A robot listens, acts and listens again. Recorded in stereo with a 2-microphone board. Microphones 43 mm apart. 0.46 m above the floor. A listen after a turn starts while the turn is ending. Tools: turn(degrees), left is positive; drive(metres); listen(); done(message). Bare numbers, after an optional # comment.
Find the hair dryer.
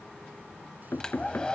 # The hair dryer: about 20° left or 160° left.
turn(20)
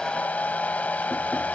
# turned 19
# So it is at 140° left.
turn(140)
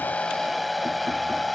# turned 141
done("Facing the hair dryer.")